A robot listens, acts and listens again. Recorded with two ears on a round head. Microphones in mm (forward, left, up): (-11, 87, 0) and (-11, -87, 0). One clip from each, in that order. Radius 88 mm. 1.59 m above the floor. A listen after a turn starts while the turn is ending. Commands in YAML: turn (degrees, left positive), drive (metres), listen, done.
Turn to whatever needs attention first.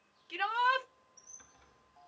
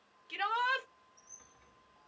turn: -30
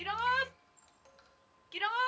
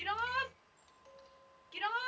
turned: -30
turn: 25
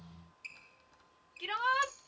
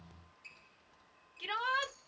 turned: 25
done: "Found it: a shout, straight ahead."